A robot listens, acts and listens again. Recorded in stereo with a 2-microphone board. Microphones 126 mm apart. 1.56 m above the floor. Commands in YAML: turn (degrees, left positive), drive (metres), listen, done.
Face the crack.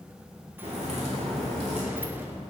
turn: -55
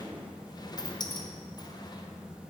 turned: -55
listen: true
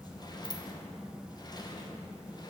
done: "I heard a crack, but can't make it out now. It was about straight ahead or 70° right."